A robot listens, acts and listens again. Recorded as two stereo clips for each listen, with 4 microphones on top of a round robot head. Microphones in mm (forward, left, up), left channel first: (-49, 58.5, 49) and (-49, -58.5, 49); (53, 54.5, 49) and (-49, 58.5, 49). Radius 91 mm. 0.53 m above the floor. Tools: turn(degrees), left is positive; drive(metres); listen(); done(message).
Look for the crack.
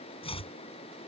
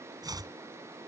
listen()
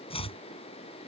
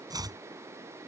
listen()
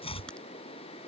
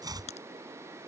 done("Found it: a crack, straight ahead.")